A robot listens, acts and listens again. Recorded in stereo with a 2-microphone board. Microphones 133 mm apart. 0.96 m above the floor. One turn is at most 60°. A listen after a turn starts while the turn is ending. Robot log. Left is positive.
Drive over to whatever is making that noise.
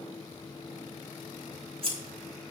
note: The scissors: about 45° right or 135° right.
cmd yaw -45
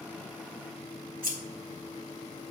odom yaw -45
note: So it is at 90° right.
cmd yaw -60
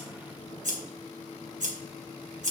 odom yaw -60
note: The scissors is now 65° right.
cmd yaw -60
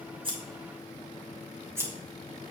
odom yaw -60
note: The scissors is now 20° right.
cmd yaw -20
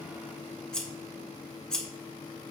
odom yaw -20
cmd fwd 1.0
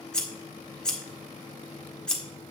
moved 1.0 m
cmd fwd 1.0
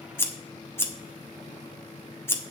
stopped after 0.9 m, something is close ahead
note: The scissors is now 15° left.
cmd yaw +15
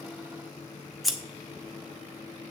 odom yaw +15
end: I am next to the scissors.